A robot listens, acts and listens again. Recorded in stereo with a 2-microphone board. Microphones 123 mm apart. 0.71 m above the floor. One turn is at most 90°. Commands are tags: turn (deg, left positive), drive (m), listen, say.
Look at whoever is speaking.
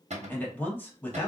<turn deg="30"/>
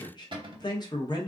<turn deg="90"/>
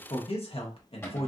<turn deg="70"/>
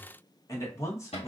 <turn deg="30"/>
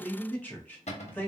<turn deg="15"/>
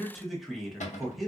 <say>Facing the man speaking.</say>